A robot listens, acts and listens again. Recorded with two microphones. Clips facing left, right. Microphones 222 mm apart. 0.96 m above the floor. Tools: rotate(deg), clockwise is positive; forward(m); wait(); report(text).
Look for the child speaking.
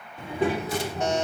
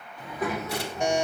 rotate(-35)
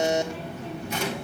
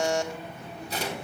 rotate(-95)
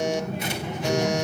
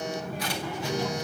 rotate(-20)
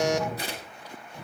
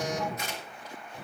report("Found it: a child speaking, straight ahead.")